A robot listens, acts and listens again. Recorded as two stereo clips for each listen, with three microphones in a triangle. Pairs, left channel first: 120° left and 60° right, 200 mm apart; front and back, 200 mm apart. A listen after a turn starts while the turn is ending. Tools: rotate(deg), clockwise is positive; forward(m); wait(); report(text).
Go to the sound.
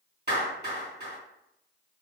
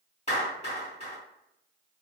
rotate(45)
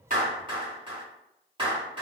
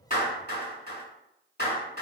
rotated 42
forward(1.0)
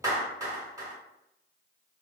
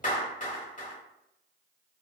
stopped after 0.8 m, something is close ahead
report("I am next to the clap.")